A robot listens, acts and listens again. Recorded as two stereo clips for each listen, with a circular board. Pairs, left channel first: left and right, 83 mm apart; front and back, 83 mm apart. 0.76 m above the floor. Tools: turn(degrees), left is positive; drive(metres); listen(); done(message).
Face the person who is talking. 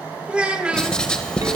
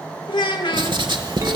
turn(degrees=-15)
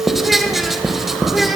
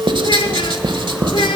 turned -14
listen()
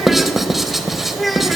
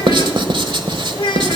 done("Found it: a child speaking, straight ahead.")